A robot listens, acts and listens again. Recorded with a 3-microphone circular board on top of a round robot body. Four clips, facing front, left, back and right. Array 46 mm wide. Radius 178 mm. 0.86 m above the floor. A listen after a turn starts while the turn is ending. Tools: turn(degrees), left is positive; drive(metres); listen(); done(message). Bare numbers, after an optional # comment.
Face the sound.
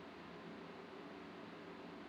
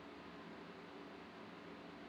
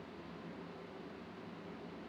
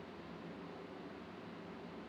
listen()
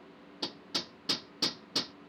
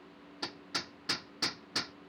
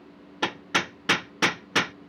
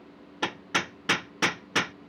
# The hammering: 155° right.
turn(-155)
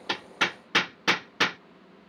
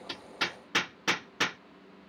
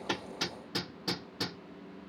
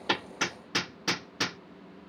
done("Found it: hammering, straight ahead.")